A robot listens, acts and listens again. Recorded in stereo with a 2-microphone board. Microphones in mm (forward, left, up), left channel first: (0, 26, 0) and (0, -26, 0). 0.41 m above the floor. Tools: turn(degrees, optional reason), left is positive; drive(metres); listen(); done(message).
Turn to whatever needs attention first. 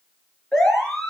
turn(degrees=15, reason="The siren: about 15° left or 165° left.")
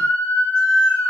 turn(degrees=150, reason="So it is at 150° left.")
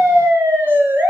turn(degrees=-45, reason="The siren is now 45° right.")
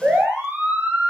turn(degrees=-25, reason="The siren is now 25° right.")
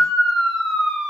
done("Facing the siren, over 4 m away.")